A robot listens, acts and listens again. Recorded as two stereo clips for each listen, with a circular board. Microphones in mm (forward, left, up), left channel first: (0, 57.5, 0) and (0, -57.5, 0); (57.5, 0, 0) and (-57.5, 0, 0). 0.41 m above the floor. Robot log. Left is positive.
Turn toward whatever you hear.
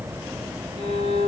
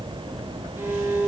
note: The violin: 110° right.
cmd yaw -110
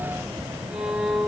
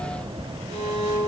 note: The violin is now 10° right.
cmd yaw -10
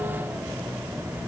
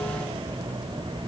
cmd idle
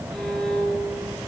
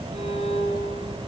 end: Found it: a violin, straight ahead, over 4 m away.